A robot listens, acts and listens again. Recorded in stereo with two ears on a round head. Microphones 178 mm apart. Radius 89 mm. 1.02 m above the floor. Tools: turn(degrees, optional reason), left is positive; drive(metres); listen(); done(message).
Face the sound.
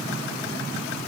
listen()
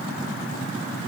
listen()
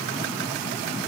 done("I can't make out anything to turn to.")